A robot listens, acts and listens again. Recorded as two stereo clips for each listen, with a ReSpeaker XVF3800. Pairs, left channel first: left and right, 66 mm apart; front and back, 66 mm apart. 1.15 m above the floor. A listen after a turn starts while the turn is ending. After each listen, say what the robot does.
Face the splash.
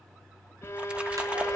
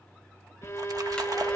Turn 160° right.
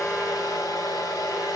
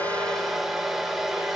Facing where the splash came from. I can't hear it now.